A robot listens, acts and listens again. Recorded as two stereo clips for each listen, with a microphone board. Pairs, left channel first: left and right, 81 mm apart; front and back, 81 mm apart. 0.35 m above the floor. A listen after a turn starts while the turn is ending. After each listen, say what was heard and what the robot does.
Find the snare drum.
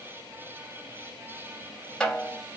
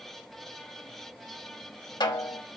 The snare drum: 15° left. Turn 15° left.
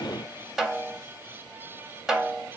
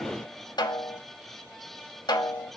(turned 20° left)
Found it: a snare drum, straight ahead.